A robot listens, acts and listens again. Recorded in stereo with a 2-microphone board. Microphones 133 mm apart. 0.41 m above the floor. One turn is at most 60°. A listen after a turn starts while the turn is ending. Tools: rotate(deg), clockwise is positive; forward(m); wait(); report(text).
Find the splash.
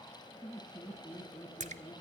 rotate(60)
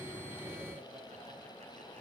wait()
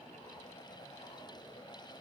report("I heard a splash, but can't make it out now. It was about 5° right or 55° right.")